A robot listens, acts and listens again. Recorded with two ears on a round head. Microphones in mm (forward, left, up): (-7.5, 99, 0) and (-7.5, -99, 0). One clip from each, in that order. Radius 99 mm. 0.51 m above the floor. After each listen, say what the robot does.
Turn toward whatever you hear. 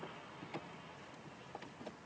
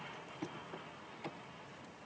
Keep listening.
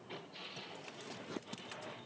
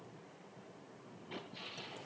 Keep listening.
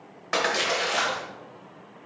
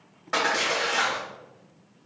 Turn 30° left.
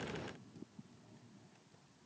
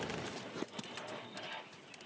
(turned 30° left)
Keep listening.
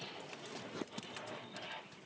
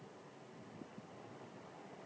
I heard a splash, but can't make it out now. It was about straight ahead or 120° left.